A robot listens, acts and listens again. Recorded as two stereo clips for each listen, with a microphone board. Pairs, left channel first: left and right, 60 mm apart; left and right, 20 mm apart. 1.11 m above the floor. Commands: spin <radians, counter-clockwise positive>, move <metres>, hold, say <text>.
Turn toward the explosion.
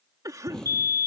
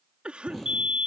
spin 0.52
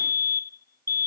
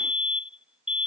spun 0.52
hold
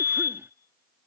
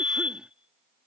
say I heard an explosion, but can't make it out now. It was about 15° right or 135° left.